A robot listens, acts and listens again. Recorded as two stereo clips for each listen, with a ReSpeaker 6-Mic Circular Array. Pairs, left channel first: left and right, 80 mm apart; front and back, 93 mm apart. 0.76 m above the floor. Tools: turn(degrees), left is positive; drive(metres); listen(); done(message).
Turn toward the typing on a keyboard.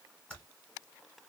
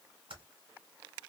turn(degrees=165)
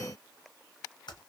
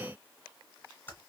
turn(degrees=65)
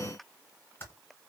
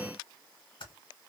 turn(degrees=30)
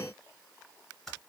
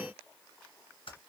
done("Found it: typing on a keyboard, straight ahead.")